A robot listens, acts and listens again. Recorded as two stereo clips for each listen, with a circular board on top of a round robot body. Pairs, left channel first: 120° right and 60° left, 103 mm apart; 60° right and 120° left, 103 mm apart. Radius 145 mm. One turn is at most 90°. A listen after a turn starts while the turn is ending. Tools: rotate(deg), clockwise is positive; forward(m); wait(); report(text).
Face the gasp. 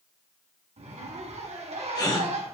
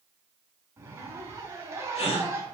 rotate(70)
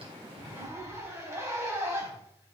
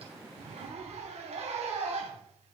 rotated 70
report("I heard a gasp from this way, but can't make it out now.")